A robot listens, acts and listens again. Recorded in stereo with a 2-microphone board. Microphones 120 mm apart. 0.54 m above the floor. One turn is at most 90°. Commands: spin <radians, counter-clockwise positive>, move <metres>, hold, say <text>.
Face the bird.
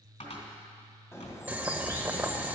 spin 0.44
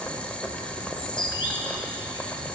spin 1.57
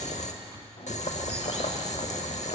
spin 0.70
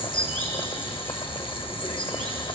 spin 0.17
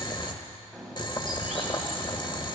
say Found it: a bird, straight ahead.